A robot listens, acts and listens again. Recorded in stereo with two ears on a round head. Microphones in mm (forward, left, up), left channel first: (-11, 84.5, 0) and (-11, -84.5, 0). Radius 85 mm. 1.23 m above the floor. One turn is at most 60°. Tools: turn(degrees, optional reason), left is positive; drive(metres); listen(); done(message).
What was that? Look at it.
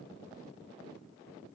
listen()
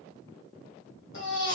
turn(degrees=60, reason="The baby crying: about 65° left or 115° left.")
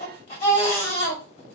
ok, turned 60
turn(degrees=35, reason="So it is at 35° left.")
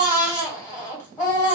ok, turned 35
turn(degrees=15, reason="The baby crying is now 15° left.")
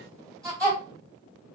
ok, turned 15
done("Found it: a baby crying, straight ahead.")